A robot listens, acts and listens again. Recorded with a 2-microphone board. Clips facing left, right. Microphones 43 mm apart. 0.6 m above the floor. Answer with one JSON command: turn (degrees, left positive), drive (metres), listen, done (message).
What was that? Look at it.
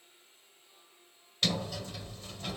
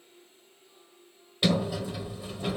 {"turn": -30}
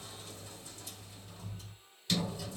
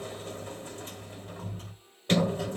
{"turn": -135}
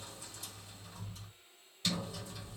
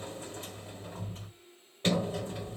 {"turn": -35}
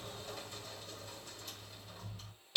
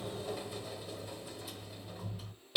{"done": "Facing the sliding door."}